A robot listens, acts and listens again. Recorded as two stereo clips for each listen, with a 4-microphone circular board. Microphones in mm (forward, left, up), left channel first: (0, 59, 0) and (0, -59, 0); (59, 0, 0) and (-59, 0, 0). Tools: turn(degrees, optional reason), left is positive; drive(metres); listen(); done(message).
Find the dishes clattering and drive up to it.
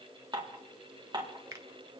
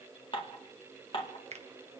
turn(degrees=-40, reason="The dishes clattering: 40° right.")
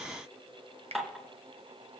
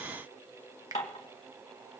drive(metres=1.0)
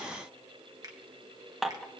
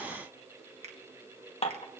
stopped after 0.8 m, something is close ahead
done("Arrived at the dishes clattering, straight ahead.")